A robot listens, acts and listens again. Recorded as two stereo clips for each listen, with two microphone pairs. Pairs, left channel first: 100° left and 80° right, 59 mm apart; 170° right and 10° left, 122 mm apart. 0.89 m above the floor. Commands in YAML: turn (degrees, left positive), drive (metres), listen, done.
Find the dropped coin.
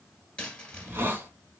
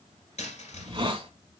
turn: 175
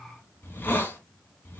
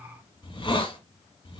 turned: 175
done: "Facing where the dropped coin came from. I can't hear it now."